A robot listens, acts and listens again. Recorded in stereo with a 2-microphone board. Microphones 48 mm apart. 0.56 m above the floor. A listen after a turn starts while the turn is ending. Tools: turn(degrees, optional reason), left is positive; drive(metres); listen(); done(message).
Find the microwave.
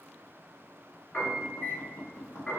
turn(degrees=60, reason="The microwave: about 60° left or 120° left.")
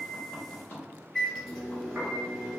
done("Found it: a microwave, straight ahead.")